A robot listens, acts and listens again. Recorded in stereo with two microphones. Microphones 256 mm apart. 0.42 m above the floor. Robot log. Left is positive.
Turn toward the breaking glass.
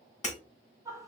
note: The breaking glass: about 25° left or 155° left.
cmd yaw +25
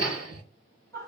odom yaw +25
cmd idle
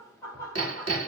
end: I heard breaking glass, but can't make it out now. It was about straight ahead or 130° left.